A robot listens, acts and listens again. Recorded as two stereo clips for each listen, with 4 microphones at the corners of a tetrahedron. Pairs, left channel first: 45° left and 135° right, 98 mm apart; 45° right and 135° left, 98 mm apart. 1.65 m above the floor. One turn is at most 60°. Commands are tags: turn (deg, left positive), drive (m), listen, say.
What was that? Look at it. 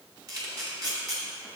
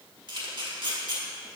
<turn deg="60"/>
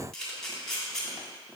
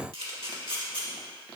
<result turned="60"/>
<turn deg="60"/>
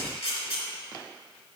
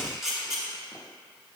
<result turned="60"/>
<turn deg="50"/>
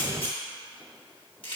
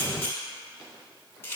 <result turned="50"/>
<turn deg="20"/>
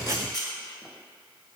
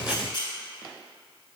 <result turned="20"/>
<say>Found it: a camera shutter, straight ahead, 1 to 2 m away.</say>